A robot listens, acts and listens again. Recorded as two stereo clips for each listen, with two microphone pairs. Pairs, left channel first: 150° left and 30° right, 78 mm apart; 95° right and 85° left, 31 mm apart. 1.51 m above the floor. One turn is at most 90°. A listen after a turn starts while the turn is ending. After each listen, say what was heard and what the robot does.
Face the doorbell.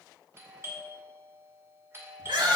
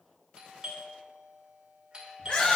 The doorbell: 25° left. Turn 25° left.
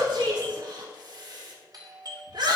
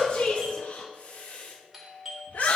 Facing the doorbell, 2 to 4 m away.